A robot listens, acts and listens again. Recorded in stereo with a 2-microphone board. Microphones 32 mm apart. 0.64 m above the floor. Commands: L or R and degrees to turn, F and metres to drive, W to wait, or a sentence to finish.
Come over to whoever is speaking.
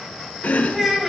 R30
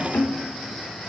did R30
W
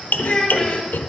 L20
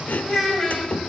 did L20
F1.0
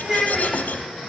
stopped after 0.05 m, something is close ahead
Something is in my way. I am facing the child speaking but have not reached it.